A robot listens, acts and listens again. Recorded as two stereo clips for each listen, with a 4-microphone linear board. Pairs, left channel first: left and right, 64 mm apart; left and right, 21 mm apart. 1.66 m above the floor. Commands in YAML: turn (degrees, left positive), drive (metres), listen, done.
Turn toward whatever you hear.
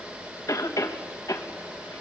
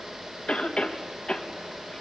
turn: 70
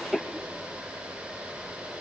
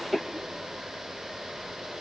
done: "Found it: a cough, straight ahead, 2 to 4 m away."